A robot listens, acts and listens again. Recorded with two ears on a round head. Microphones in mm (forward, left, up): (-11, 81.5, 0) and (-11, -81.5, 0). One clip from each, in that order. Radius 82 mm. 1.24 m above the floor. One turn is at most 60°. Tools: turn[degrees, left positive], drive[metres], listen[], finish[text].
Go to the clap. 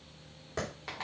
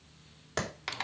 Thought: The clap: about 65° right or 115° right.
Action: turn[-60]
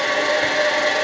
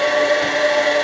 Action: listen[]
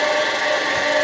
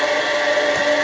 Action: listen[]
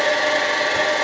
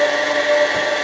Action: finish[I heard a clap, but can't make it out now. It was about 5° right or 55° right. I did not reach it.]